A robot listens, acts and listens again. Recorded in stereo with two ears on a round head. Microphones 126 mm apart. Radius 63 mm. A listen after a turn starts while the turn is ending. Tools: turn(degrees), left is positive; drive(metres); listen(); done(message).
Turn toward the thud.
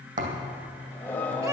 turn(degrees=-60)
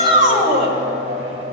listen()
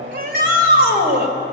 done("I heard a thud, but can't make it out now. It was about straight ahead or 60° right.")